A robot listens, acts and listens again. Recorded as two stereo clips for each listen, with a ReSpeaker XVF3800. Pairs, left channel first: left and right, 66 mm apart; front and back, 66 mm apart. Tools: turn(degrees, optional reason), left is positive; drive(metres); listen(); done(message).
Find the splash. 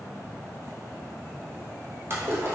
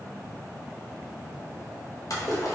turn(degrees=-35, reason="The splash: 35° right.")
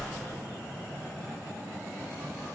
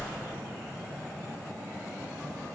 done("Facing the splash, under 1 m away.")